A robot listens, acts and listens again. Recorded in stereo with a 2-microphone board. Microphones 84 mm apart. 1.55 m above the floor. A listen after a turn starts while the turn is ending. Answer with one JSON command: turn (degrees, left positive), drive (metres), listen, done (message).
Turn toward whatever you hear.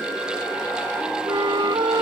{"turn": -90}
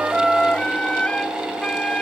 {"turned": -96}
{"turn": 15}
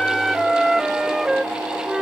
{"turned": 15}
{"done": "Found it: a flute, straight ahead."}